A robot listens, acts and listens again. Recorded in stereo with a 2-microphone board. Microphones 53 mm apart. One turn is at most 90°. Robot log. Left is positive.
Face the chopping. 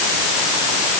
cmd idle
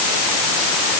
cmd idle
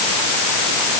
end: I can't make out chopping.